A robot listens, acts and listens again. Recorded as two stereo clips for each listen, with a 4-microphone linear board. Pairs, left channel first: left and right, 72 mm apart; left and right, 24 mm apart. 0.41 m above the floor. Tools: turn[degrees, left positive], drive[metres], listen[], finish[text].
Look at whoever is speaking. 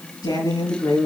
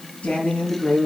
Action: turn[90]
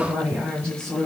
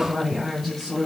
Thought: So it is at 10° left.
Action: turn[10]
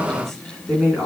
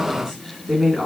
Action: finish[Facing the woman speaking, 2 to 4 m away.]